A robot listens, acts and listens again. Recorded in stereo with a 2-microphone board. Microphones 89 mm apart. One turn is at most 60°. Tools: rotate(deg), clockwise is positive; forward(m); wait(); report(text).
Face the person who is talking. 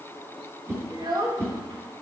rotate(50)
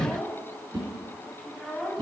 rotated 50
report("Found it: a child speaking, straight ahead.")